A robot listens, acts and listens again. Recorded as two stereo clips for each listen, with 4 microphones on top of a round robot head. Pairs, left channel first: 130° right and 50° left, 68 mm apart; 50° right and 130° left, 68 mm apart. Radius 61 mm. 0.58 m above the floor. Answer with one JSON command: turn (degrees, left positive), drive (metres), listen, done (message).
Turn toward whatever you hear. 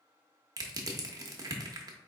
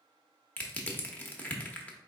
{"turn": 15}
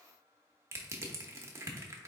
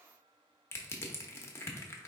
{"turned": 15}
{"done": "Found it: crushing, straight ahead."}